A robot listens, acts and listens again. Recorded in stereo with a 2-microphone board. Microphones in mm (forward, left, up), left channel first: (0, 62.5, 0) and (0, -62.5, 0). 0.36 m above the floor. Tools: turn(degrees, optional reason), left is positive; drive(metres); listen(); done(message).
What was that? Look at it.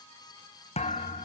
turn(degrees=60, reason="The thud: about 60° left or 120° left.")
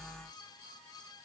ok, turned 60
listen()
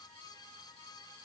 done("I heard a thud, but can't make it out now. It was about straight ahead or 60° left.")